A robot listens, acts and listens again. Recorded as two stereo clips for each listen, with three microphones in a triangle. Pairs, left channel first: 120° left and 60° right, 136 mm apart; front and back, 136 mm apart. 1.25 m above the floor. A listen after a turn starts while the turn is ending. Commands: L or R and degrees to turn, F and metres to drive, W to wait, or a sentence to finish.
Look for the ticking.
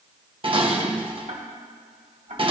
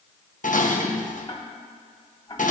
R55
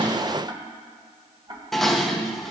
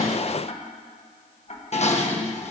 R10
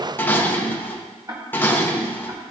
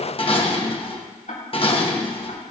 Facing the ticking, 2 to 4 m away.